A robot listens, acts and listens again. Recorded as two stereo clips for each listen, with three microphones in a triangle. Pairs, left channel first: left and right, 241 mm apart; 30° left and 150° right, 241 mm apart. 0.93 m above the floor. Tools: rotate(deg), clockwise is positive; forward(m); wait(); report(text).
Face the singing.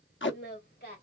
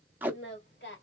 rotate(-50)
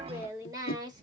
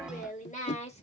rotate(25)
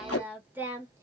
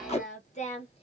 rotate(15)
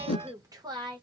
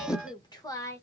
rotate(40)
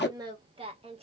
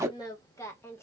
rotate(45)
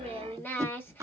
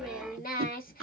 rotate(-15)
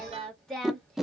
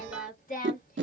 report("Found it: singing, straight ahead.")